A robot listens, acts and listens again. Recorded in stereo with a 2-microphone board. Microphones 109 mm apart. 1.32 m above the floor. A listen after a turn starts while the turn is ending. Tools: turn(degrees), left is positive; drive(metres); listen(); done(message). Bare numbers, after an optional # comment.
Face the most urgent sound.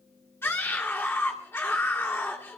# The scream: about 20° left or 160° left.
turn(20)
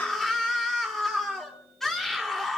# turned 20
done("Found it: a scream, straight ahead, 1 to 2 m away.")